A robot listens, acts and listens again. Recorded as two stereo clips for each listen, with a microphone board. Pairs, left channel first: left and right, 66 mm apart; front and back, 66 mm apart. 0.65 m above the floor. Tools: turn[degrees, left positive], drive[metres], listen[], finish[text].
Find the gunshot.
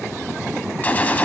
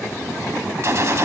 Thought: The gunshot: 150° left.
Action: turn[150]
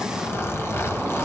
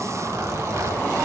Action: finish[Facing where the gunshot came from. I can't hear it now.]